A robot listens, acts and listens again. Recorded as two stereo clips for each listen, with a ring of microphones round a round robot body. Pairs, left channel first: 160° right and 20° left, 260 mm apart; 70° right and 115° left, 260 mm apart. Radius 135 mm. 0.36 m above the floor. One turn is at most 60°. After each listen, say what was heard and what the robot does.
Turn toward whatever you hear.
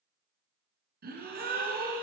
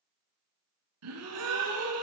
The gasp: 80° left. Turn 60° left.
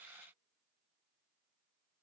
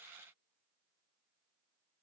Nothing new. It was at 20° left. Turn 20° left.
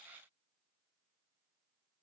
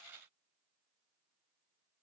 Facing where the gasp came from. I can't hear it now.